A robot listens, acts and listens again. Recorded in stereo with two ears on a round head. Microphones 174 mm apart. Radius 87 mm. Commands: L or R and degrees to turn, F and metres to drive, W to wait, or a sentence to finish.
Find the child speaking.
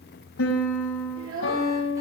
R90
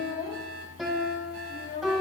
L25
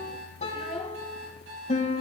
Facing the child speaking.